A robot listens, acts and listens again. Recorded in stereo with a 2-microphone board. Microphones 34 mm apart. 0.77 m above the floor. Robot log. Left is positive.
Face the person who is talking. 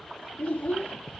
note: The child speaking: about 55° left or 125° left.
cmd yaw +55
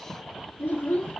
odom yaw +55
note: So it is at 65° left.
cmd yaw +65
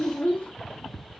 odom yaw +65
note: The child speaking is now 30° left.
cmd yaw +30
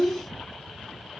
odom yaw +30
end: Found it: a child speaking, straight ahead, under 1 m away.